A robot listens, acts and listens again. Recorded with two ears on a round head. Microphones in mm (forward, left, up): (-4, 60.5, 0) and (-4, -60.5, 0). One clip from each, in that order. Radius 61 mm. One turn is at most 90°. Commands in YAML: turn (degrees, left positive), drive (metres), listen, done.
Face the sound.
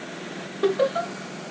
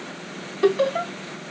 turn: -55
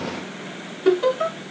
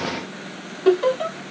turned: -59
done: "Found it: laughter, straight ahead."